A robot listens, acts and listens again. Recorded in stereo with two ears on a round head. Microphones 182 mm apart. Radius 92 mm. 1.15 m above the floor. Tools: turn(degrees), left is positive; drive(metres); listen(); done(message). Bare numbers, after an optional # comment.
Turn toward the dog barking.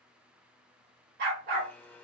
# The dog barking: about 45° right or 135° right.
turn(-45)
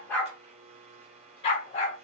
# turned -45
# So it is at 35° left.
turn(35)
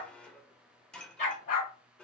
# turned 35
# The dog barking is now 40° left.
turn(40)
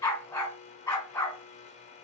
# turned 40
# The dog barking is now 15° left.
turn(15)
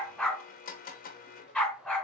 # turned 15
done("Facing the dog barking.")